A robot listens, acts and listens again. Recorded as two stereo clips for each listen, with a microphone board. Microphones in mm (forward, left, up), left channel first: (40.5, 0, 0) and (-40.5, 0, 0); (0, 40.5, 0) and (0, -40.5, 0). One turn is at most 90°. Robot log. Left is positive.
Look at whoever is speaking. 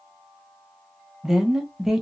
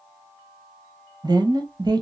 note: The woman speaking: 95° right.
cmd yaw -90
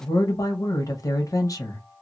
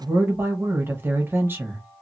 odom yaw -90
note: The woman speaking is now 35° right.
cmd yaw -35
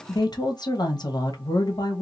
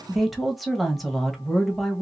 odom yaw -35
end: Found it: a woman speaking, straight ahead, 1 to 2 m away.